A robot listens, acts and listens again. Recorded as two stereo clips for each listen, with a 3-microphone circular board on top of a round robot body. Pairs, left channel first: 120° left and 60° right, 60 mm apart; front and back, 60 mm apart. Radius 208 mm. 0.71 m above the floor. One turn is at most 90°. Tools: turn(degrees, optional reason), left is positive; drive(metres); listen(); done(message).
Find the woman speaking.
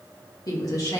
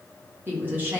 turn(degrees=90, reason="The woman speaking: 120° left.")
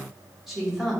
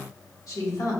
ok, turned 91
turn(degrees=25, reason="The woman speaking is now 25° left.")
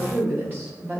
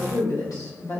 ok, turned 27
done("Found it: a woman speaking, straight ahead.")